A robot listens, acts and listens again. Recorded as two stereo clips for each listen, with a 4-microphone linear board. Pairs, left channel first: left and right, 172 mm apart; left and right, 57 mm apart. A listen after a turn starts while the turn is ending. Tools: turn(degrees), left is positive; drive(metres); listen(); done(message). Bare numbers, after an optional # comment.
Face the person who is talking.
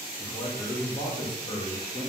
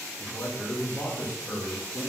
# The man speaking: about 30° left or 150° left.
turn(30)
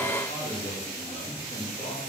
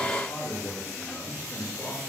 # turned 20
# So it is at 130° left.
turn(130)
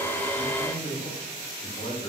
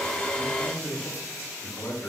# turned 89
# The man speaking is now 40° left.
turn(40)
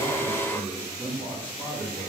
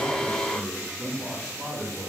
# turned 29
# The man speaking is now 10° left.
turn(10)
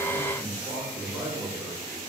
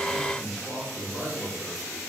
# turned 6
done("Found it: a man speaking, straight ahead, 2 to 4 m away.")